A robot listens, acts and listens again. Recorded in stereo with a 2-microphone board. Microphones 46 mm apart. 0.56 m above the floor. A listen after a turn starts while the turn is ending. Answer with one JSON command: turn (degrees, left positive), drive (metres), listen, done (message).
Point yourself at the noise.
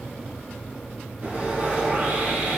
{"turn": -50}
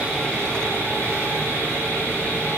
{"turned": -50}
{"turn": -80}
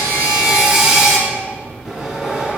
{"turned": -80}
{"turn": -10}
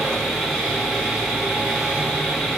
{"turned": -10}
{"done": "Found it: sawing, straight ahead."}